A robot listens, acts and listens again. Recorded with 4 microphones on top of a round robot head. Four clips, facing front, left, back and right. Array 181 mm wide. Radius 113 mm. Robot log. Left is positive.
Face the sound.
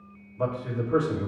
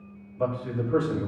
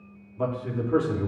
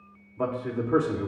note: The man speaking: 115° right.
cmd yaw -115
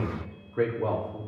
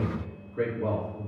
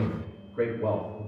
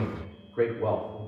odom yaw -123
note: The man speaking is now 20° right.
cmd yaw -20
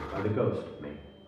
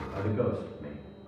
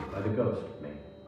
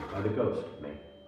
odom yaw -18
note: The man speaking is now 15° right.
cmd yaw -15
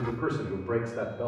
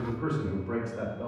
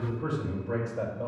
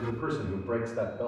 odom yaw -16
note: The man speaking is now 10° right.
cmd yaw -10
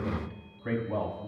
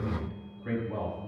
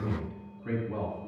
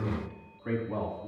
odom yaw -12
end: Facing the man speaking.